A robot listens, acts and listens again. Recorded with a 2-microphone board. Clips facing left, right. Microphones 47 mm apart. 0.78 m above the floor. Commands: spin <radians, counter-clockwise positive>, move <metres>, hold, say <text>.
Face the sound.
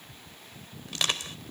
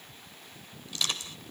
spin 0.96
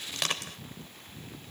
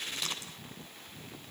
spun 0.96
spin 1.22
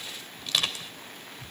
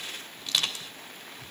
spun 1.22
say Found it: crushing, straight ahead.